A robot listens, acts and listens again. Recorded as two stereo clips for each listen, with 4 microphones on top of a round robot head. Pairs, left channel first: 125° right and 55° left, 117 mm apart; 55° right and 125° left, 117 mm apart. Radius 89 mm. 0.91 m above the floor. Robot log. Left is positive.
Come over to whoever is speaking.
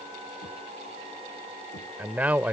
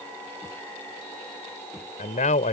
note: The man speaking: 25° right.
cmd yaw -25
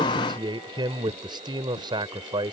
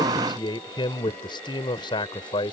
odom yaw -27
cmd fwd 1.0
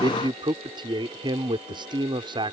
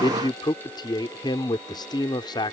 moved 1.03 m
cmd fwd 1.0
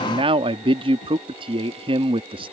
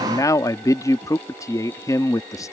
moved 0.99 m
note: The man speaking is now 10° left.
cmd yaw +10
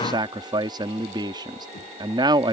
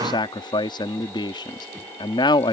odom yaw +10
cmd fwd 1.0
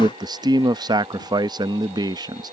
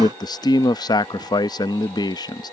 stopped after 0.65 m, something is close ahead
end: I am next to the man speaking.